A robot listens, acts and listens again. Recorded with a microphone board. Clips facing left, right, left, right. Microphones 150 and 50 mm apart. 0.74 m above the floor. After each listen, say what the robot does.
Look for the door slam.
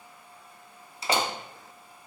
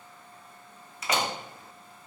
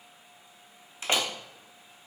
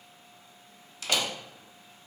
Turn 30° left.
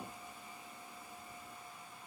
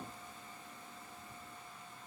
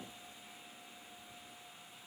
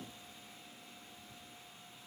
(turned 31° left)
Keep listening.
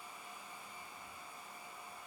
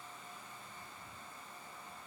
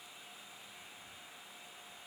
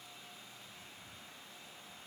I heard a door slam, but can't make it out now. It was about straight ahead or 115° left.